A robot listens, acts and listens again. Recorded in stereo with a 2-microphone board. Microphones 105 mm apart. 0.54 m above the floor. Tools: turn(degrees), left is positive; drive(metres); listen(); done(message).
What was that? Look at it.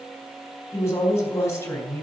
turn(degrees=25)
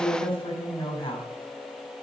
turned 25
turn(degrees=130)
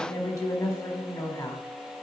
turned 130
turn(degrees=35)
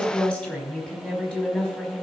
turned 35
turn(degrees=10)
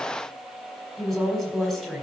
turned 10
done("Found it: a woman speaking, straight ahead, 2 to 4 m away.")